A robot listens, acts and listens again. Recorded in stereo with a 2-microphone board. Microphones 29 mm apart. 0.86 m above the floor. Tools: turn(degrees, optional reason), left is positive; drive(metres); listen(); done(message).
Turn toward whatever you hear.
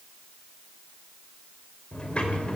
turn(degrees=40, reason="The sliding door: about 40° left or 140° left.")
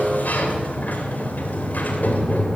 turn(degrees=100, reason="So it is at 100° left.")
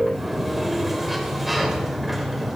done("Facing the sliding door.")